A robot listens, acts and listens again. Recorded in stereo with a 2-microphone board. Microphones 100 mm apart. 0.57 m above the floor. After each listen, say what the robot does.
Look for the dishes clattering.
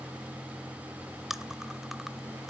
Keep listening.
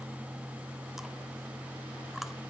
Keep listening.
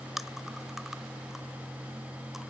I can't make out dishes clattering.